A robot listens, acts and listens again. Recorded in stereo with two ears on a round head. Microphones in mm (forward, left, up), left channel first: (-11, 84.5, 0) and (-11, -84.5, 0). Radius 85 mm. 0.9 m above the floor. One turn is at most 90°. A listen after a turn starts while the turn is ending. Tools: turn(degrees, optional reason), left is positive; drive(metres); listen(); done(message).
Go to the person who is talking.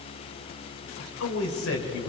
turn(degrees=90)
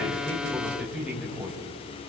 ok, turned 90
drive(metres=1.0)
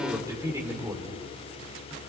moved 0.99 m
turn(degrees=-20, reason="The man speaking is now 20° right.")
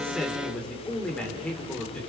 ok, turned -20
drive(metres=1.0)
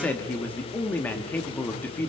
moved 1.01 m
turn(degrees=10, reason="The man speaking is now 10° left.")
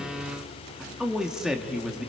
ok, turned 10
drive(metres=1.0)
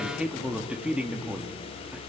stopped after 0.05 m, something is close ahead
done("I am next to the man speaking.")